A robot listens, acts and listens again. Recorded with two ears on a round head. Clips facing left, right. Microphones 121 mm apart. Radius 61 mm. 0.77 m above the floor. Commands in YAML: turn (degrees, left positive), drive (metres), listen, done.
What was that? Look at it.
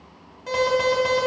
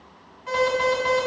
turn: 45
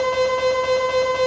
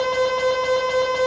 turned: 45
done: "Found it: an alarm, straight ahead."